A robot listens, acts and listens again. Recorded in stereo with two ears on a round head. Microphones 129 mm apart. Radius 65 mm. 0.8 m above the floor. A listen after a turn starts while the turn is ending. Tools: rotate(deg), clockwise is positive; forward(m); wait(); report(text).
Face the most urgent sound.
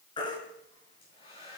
rotate(-30)
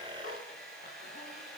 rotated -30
wait()
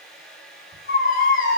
rotate(-115)
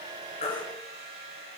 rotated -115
rotate(-35)
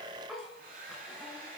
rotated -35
wait()
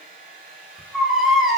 report("Found it: a baby crying, straight ahead, over 4 m away.")